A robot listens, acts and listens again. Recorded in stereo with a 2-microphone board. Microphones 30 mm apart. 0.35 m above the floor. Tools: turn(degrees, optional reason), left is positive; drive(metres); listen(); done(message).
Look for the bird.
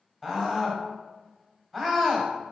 listen()
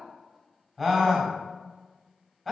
listen()
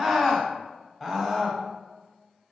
done("I can't make out a bird, only a scream.")